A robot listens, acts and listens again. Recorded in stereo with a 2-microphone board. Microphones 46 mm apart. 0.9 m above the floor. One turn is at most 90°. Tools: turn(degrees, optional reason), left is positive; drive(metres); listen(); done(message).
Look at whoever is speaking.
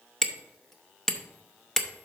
listen()
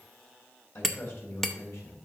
turn(degrees=60, reason="The man speaking: about 60° left or 120° left.")
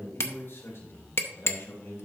turn(degrees=60, reason="So it is at 60° left.")
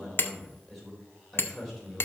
done("Facing the man speaking.")